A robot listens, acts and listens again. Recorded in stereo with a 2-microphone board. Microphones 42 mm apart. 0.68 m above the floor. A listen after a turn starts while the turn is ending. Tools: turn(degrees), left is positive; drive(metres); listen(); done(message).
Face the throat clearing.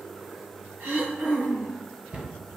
turn(degrees=-90)
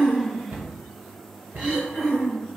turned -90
done("Facing the throat clearing, 1 to 2 m away.")